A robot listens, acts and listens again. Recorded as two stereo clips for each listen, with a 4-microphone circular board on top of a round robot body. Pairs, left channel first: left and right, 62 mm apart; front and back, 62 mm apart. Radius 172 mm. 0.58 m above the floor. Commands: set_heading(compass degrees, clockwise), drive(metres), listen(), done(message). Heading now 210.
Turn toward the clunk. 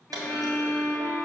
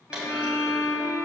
set_heading(320)
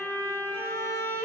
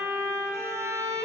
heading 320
done("Facing where the clunk came from. I can't hear it now.")